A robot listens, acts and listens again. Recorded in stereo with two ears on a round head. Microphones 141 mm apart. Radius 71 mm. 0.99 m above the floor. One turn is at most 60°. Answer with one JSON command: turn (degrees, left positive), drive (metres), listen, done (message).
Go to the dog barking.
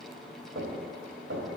{"listen": true}
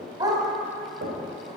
{"turn": -25}
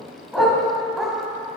{"drive": 1.0}
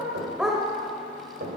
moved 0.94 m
{"drive": 1.0}
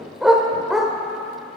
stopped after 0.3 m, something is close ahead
{"done": "I am next to the dog barking."}